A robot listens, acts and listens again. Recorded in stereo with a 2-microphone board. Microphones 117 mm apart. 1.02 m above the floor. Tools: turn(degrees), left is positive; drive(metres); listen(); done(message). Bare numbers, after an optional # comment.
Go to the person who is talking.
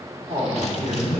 turn(-90)
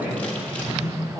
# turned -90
drive(1.0)
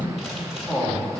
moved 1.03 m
drive(1.0)
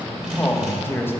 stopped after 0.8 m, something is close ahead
# The man speaking is now 20° left.
turn(20)
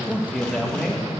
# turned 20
done("I am next to the man speaking.")